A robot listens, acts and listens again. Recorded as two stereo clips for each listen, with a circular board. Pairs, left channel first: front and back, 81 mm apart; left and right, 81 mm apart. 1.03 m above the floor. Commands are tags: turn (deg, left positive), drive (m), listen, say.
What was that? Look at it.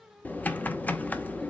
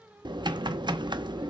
<turn deg="-70"/>
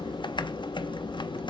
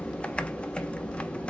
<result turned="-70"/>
<turn deg="15"/>
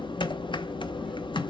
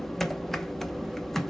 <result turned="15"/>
<say>Facing the typing on a keyboard.</say>